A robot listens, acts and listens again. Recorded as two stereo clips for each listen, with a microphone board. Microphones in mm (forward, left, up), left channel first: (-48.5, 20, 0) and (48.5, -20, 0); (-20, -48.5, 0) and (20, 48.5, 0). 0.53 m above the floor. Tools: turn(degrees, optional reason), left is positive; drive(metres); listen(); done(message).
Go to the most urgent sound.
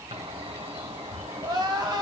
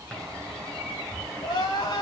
turn(degrees=-70, reason="The crying: 70° right.")
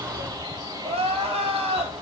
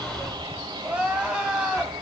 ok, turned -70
turn(degrees=-15, reason="The crying is now 15° right.")
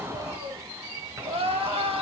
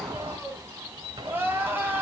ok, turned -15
drive(metres=1.0)
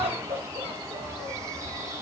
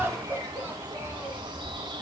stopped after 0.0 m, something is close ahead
done("Something is in my way. I am facing the crying but have not reached it.")